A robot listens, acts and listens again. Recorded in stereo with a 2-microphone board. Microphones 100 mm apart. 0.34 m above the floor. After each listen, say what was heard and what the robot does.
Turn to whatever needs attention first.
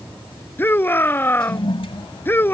The shout: about 20° left or 160° left. Turn 20° left.
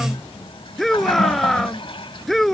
Facing the shout.